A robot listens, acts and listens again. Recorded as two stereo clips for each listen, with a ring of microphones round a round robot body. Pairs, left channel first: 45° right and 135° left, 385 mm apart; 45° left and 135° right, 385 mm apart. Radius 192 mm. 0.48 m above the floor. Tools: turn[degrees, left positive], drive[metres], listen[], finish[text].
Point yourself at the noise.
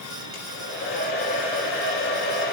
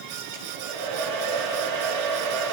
Thought: The hair dryer: 105° right.
Action: turn[-105]
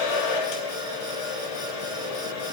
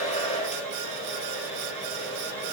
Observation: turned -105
Thought: The hair dryer is now 30° right.
Action: turn[-30]
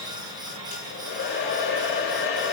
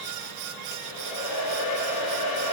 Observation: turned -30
Thought: The hair dryer is now 15° left.
Action: turn[15]
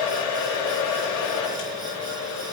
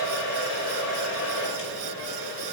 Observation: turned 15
Action: finish[Found it: a hair dryer, straight ahead, over 4 m away.]